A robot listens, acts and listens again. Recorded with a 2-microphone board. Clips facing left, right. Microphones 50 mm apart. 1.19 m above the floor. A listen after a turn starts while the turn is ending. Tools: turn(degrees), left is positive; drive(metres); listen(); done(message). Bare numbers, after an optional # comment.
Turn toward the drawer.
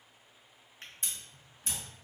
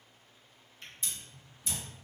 # The drawer: about 50° left or 130° left.
turn(50)
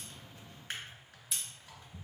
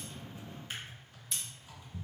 # So it is at 70° left.
turn(70)
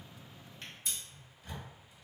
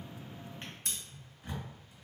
# The drawer is now 30° right.
turn(-30)
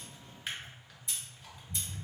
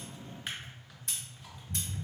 done("Found it: a drawer, straight ahead, 1 to 2 m away.")